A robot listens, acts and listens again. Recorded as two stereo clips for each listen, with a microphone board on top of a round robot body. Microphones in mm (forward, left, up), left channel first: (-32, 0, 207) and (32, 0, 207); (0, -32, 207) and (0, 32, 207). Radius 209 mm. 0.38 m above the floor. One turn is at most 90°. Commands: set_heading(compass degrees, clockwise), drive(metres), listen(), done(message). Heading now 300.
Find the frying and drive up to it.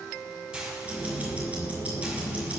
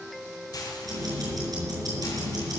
set_heading(15)
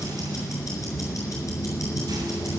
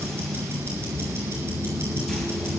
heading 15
listen()
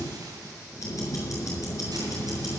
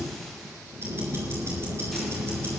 listen()
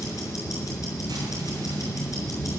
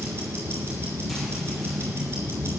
done("Facing where the frying came from. I can't hear it now. I did not reach it.")